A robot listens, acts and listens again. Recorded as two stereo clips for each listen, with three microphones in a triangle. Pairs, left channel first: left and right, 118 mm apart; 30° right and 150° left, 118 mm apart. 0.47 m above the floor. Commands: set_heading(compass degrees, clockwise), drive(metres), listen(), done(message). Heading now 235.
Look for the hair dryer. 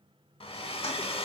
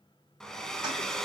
set_heading(180)
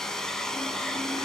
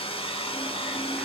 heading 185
done("Found it: a hair dryer, straight ahead.")